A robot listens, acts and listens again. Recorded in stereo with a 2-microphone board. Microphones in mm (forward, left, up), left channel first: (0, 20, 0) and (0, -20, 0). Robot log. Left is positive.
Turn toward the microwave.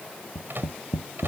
note: The microwave: about 70° right or 110° right.
cmd yaw -70
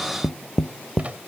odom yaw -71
note: So it is at 35° right.
cmd yaw -35
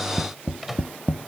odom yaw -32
end: Found it: a microwave, straight ahead.